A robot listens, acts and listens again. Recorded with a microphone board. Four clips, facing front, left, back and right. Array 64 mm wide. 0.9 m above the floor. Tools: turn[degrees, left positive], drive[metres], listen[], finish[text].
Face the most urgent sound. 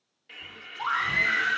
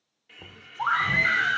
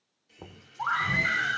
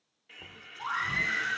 Thought: The scream: 95° left.
Action: turn[95]
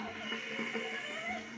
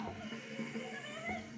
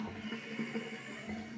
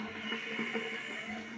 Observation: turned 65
Thought: Nothing new. It was at 30° left.
Action: turn[30]
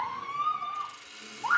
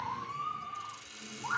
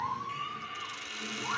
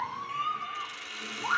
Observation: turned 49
Thought: The scream is now 20° right.
Action: turn[-20]
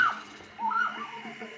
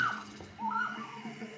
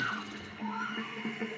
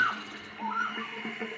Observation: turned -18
Action: finish[Facing the scream, over 4 m away.]